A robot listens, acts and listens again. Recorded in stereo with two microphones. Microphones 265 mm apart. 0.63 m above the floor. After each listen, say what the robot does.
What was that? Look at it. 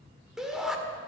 Turn 30° left.
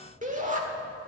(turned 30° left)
Turn 30° right.
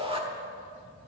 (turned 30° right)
Turn 20° right.
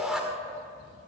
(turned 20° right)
Facing the shout, 1 to 2 m away.